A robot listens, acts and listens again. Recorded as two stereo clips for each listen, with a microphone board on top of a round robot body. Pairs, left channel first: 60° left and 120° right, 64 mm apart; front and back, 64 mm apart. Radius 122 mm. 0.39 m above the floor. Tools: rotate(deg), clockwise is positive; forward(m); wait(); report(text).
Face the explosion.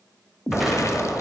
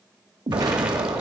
rotate(-150)
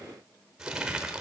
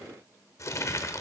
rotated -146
report("Facing where the explosion came from. I can't hear it now.")